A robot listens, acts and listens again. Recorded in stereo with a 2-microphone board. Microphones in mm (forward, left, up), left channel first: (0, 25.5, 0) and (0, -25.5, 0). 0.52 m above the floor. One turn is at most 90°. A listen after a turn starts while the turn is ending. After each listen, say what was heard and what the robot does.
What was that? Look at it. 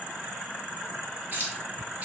The keys jangling: about 35° right or 145° right. Turn 35° right.
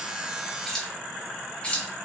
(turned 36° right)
So it is at 20° left. Turn 20° left.
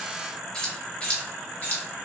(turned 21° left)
The keys jangling is now 35° left. Turn 35° left.
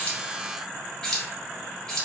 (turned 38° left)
The keys jangling is now 10° left. Turn 10° left.
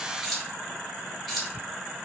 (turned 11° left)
Found it: keys jangling, straight ahead, 1 to 2 m away.